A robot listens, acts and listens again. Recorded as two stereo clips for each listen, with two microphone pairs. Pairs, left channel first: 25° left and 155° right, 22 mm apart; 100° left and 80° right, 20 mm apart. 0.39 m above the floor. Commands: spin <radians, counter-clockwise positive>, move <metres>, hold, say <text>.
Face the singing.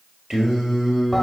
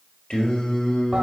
spin 2.53
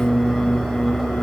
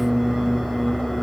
say Found it: singing, straight ahead.